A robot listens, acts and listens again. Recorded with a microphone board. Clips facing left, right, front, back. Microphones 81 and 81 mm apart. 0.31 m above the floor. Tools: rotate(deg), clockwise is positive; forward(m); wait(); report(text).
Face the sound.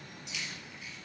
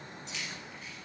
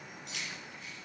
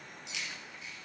rotate(40)
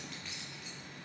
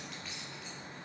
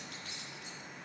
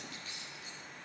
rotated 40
report("Found it: keys jangling, straight ahead.")